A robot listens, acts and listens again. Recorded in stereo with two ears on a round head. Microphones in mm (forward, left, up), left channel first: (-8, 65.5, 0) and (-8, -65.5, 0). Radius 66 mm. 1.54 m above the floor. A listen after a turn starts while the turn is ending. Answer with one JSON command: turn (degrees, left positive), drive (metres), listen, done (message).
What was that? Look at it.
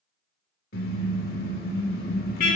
{"turn": 65}
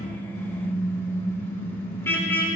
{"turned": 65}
{"turn": 15}
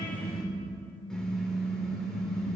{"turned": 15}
{"done": "Found it: a car horn, straight ahead."}